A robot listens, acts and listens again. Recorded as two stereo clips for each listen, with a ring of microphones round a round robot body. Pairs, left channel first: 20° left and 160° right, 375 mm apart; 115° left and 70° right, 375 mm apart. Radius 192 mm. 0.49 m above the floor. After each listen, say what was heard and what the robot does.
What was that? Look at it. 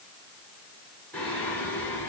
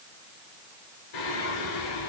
The singing: 110° left. Turn 110° left.
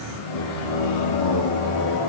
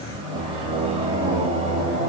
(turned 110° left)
Found it: singing, straight ahead, over 4 m away.